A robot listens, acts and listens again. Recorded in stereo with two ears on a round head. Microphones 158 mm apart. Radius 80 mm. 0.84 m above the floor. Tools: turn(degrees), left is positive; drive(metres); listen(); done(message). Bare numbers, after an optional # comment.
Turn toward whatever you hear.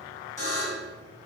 # The buzzer: about 15° left or 165° left.
turn(15)
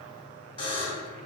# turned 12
# So it is at 150° left.
turn(150)
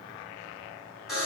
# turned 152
done("Facing the buzzer, 1 to 2 m away.")